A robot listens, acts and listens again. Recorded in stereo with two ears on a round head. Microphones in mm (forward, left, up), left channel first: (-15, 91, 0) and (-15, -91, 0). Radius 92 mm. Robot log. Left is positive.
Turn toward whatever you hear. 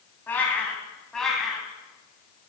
cmd yaw +30
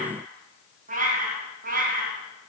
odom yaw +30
note: So it is at 45° right.
cmd yaw -45
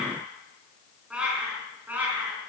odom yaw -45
note: The cat meowing is now 10° right.
cmd yaw -10
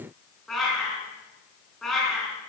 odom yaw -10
end: Facing the cat meowing, over 4 m away.